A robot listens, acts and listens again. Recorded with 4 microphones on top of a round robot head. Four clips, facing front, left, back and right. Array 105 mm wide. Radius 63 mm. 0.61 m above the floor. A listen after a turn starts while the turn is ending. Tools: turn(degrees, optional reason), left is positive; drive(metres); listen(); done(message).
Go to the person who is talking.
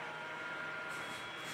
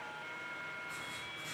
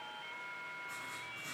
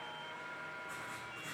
listen()
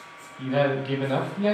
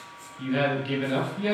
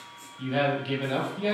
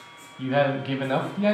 turn(degrees=-70, reason="The man speaking: 70° right.")
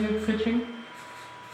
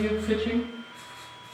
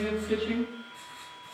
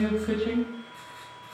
turn(degrees=-10, reason="The man speaking is now 10° right.")
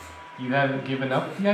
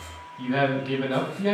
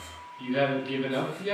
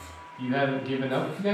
drive(metres=1.0)
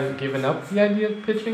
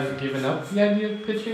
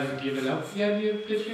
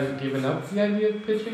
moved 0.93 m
drive(metres=1.0)
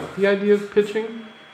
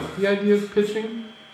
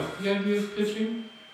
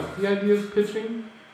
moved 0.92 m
drive(metres=1.0)
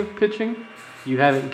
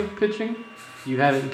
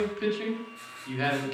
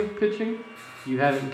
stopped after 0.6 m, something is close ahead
turn(degrees=10, reason="The man speaking is now 10° left.")
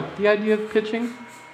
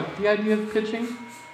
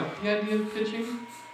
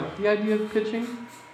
done("I am next to the man speaking.")